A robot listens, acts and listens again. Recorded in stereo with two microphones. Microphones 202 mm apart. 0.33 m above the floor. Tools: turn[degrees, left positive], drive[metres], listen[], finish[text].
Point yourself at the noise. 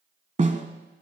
Thought: The snare drum: about 35° right or 145° right.
Action: turn[-35]
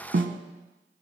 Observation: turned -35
Thought: So it is at 110° right.
Action: turn[-110]
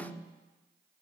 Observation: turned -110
Action: listen[]
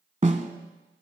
Thought: The snare drum is now 35° right.
Action: turn[-35]
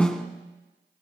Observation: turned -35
Action: finish[Found it: a snare drum, straight ahead, 1 to 2 m away.]